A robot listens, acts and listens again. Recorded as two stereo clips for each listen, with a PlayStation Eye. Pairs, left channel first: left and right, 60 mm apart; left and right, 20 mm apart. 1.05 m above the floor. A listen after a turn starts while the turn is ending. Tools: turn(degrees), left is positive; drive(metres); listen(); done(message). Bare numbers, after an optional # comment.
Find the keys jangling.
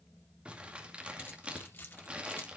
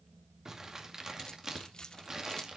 # The keys jangling: about 40° left or 140° left.
turn(40)
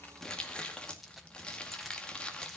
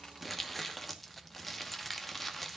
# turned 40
done("Found it: keys jangling, straight ahead.")